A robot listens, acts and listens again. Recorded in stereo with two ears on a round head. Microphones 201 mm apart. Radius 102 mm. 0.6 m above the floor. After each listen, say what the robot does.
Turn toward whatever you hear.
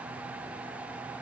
Keep listening.
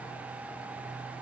Keep listening.
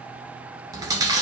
Turn 15° right.
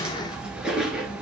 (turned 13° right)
Found it: chewing, straight ahead, 1 to 2 m away.